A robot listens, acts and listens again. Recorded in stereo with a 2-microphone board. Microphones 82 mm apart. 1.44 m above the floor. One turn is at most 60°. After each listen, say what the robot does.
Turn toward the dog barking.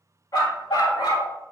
Turn 60° left.
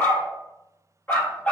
Turn 20° left.
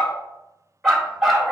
Found it: a dog barking, straight ahead.